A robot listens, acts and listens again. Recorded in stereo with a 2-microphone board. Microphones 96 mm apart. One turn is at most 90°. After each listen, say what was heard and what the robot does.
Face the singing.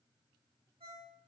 Keep listening.
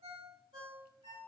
Keep listening.
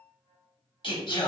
The singing: about 60° left or 120° left. Turn 60° left.
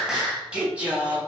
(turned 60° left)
So it is at 20° right. Turn 20° right.
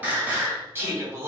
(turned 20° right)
The singing is now 30° right. Turn 30° right.
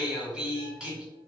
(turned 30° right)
The singing is now 10° right. Turn 10° right.
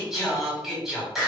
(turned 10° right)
Facing the singing.